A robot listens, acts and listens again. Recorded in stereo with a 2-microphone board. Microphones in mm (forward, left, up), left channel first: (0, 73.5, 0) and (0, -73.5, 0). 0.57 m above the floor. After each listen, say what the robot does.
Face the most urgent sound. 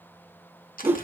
Keep listening.
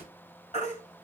Turn 50° left.
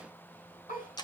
Keep listening.
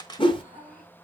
Keep listening.
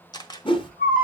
Turn 80° left.
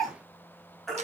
Found it: a baby crying, straight ahead.